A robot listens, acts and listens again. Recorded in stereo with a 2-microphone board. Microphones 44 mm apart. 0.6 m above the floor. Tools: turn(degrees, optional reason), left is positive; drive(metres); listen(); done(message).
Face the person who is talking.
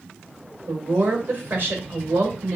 turn(degrees=-50, reason="The woman speaking: about 50° right or 130° right.")
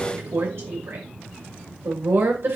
turn(degrees=-75, reason="So it is at 75° right.")
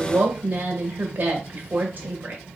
turn(degrees=-45, reason="The woman speaking is now 45° right.")
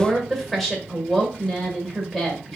done("Found it: a woman speaking, straight ahead.")